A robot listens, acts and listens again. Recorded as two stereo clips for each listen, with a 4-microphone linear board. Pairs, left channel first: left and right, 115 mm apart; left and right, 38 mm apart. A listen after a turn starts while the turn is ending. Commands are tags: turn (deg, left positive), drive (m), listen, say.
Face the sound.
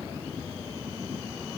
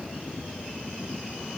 <listen/>
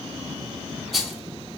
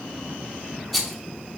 <turn deg="30"/>
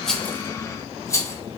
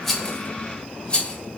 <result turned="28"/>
<turn deg="150"/>
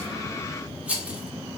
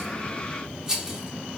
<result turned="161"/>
<turn deg="-15"/>
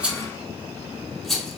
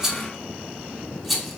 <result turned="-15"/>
<say>Found it: a rattle, straight ahead.</say>